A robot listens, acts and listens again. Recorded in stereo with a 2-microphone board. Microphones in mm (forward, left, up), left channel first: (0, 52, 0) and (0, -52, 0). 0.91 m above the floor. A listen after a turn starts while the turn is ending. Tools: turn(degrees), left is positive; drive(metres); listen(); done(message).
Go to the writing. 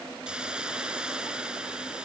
listen()
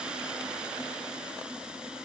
listen()
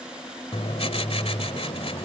turn(degrees=75)
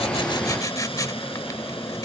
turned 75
turn(degrees=35)
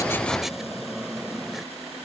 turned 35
drive(metres=1.0)
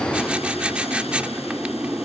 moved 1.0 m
turn(degrees=-10)
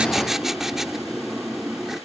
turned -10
drive(metres=1.0)
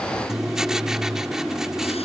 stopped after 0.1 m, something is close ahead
done("Arrived at the writing, straight ahead.")